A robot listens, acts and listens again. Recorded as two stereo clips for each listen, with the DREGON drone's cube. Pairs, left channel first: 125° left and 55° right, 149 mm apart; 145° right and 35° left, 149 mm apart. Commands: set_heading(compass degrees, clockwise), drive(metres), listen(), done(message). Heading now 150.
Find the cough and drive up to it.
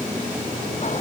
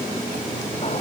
listen()
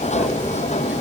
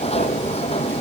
listen()
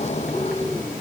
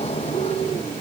done("I can't make out a cough, only a sliding door.")